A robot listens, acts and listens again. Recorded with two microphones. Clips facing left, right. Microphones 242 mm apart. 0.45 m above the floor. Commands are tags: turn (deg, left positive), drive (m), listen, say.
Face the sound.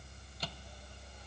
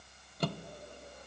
<turn deg="-60"/>
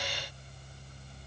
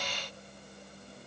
<listen/>
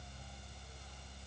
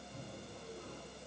<listen/>
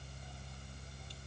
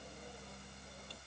<say>I heard a microwave, but can't make it out now. It was about straight ahead or 60° right.</say>